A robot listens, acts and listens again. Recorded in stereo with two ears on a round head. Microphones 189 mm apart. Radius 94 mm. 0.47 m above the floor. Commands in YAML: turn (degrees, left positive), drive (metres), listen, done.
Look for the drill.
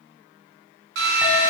turn: -60
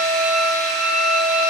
done: "Found it: a drill, straight ahead, 2 to 4 m away."